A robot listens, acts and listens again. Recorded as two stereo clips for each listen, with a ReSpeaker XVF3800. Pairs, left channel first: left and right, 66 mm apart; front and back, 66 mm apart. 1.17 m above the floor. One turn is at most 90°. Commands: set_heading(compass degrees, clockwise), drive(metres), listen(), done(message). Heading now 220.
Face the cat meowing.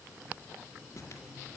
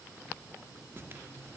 listen()
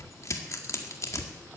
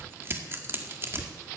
listen()
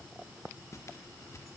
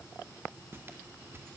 done("I can't make out a cat meowing, only tearing paper.")